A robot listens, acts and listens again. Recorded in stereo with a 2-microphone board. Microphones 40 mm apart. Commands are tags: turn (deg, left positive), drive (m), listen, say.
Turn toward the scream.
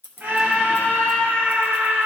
<turn deg="-50"/>
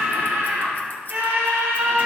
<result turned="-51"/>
<turn deg="-75"/>
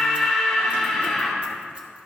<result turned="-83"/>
<turn deg="10"/>
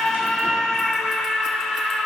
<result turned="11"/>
<say>Found it: a scream, straight ahead.</say>